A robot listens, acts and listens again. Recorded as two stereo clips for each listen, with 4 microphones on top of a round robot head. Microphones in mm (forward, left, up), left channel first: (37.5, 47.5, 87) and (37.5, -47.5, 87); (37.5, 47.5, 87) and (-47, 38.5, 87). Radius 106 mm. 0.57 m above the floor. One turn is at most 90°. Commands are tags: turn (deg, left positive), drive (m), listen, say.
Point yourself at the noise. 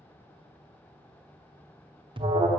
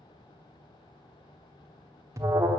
<turn deg="-90"/>
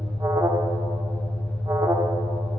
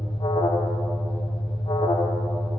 <turn deg="-35"/>
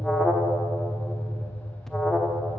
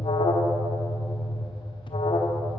<say>Found it: an alarm, straight ahead.</say>